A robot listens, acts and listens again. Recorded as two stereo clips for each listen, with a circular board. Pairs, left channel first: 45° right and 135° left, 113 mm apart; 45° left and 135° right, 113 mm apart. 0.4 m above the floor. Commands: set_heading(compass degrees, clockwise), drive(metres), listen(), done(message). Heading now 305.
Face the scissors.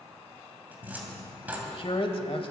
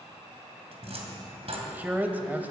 listen()
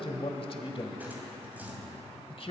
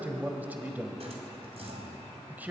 listen()
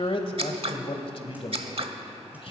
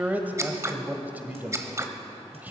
set_heading(140)
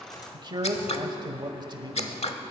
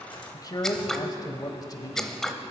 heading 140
set_heading(180)
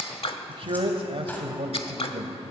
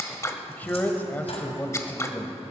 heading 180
set_heading(200)
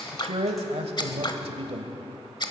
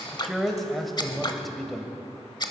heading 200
done("Facing the scissors.")